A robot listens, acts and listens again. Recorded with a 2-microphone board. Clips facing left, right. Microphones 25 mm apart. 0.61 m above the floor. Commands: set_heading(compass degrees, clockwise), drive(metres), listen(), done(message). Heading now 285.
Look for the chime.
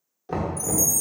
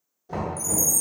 set_heading(255)
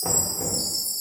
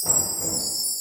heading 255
set_heading(120)
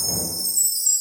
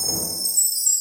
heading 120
done("Found it: a chime, straight ahead.")